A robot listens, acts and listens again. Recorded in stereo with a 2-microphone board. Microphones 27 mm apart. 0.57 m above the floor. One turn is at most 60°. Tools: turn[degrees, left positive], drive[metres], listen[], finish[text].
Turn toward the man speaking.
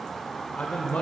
Thought: The man speaking: about 65° left or 115° left.
Action: turn[60]
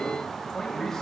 Thought: So it is at 20° left.
Action: turn[20]
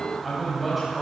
Action: finish[Found it: a man speaking, straight ahead.]